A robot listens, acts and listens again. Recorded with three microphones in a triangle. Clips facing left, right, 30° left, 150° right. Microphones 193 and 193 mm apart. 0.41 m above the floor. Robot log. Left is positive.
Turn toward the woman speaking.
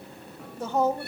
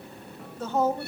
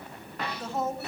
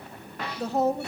note: The woman speaking: 165° left.
cmd yaw +165
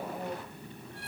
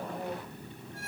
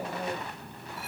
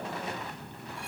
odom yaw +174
note: Nothing new. It was at 10° right.
cmd yaw -10
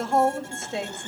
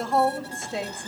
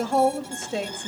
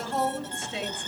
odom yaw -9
end: Facing the woman speaking.